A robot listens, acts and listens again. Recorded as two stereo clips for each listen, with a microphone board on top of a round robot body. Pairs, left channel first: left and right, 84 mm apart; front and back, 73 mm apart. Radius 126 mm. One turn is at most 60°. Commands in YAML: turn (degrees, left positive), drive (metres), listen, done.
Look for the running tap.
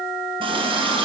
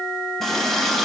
turn: -60
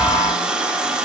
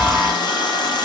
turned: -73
turn: -10
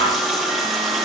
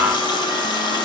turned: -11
done: "Found it: a running tap, straight ahead."